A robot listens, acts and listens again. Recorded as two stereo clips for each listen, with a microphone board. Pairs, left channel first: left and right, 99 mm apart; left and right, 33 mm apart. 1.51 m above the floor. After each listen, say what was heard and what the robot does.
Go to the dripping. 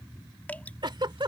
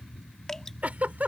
The dripping: about 15° left or 165° left. Turn 15° left.
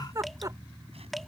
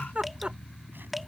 Drive 1.0 m forward.
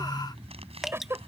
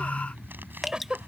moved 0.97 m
Drive 1.0 m forward.
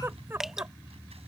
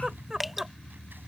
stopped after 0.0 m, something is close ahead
Arrived at the dripping, straight ahead.